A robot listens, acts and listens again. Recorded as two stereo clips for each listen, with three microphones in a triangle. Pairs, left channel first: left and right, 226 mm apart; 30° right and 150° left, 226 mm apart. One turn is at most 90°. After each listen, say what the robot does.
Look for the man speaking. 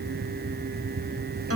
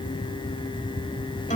Keep listening.
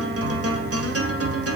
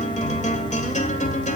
Keep listening.
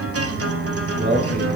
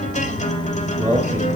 Turn 90° right.
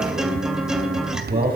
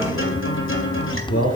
Turn 40° right.
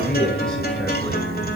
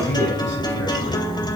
Keep listening.
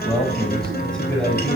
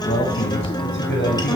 Facing the man speaking.